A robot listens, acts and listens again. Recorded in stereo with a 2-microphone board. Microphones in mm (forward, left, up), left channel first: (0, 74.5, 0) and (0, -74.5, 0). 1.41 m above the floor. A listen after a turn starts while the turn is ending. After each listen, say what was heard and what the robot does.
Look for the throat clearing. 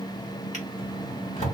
Keep listening.
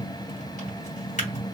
Keep listening.
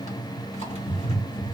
I can't make out throat clearing, only a drawer.